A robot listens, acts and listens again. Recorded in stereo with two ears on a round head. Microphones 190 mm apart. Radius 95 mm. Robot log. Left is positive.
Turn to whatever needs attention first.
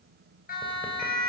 note: The siren: about 45° left or 135° left.
cmd yaw +45
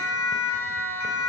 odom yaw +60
note: So it is at 75° left.
cmd yaw +75
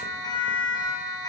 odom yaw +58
note: The siren is now 20° left.
cmd yaw +20
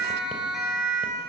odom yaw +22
end: Found it: a siren, straight ahead.